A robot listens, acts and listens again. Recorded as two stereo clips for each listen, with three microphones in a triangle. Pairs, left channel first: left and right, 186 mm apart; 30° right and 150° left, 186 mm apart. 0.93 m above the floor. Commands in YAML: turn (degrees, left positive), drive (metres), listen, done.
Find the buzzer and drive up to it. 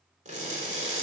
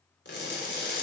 listen: true
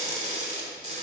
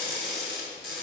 listen: true
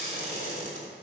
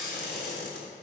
done: "I can't make out a buzzer, only crushing."